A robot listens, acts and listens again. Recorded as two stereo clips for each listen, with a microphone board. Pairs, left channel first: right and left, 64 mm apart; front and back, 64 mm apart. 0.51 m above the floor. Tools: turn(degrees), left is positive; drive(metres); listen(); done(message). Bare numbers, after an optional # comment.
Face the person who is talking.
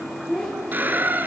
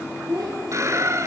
# The child speaking: 170° right.
turn(-170)
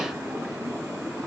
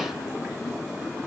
listen()
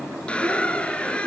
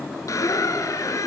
listen()
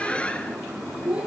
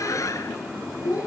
# The child speaking is now 20° left.
turn(20)
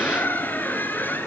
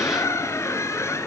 listen()
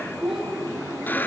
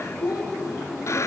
done("Found it: a child speaking, straight ahead.")